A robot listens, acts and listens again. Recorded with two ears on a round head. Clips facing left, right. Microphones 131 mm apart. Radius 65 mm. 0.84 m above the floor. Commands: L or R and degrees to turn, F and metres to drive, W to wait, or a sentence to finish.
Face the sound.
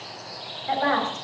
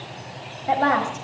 R40
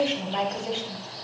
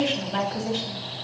Found it: a woman speaking, straight ahead.